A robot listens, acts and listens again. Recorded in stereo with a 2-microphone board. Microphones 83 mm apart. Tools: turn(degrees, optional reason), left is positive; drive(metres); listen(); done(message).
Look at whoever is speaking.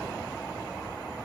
listen()
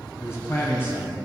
turn(degrees=25, reason="The man speaking: about 25° left or 155° left.")
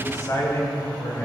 turn(degrees=40, reason="The man speaking: about 40° left or 140° left.")
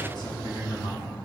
turn(degrees=115, reason="So it is at 115° left.")
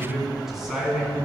done("Found it: a man speaking, straight ahead.")